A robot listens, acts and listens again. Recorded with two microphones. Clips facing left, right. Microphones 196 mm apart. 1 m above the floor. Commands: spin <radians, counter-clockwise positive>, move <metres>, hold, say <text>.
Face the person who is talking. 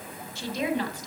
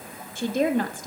spin -0.79
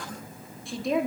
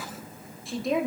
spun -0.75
say Found it: a woman speaking, straight ahead.